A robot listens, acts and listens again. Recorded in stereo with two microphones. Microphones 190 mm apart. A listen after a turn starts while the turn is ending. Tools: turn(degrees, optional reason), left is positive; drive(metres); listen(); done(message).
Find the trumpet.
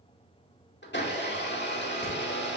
listen()
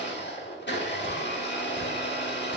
listen()
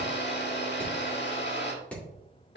done("I can't make out a trumpet to turn to.")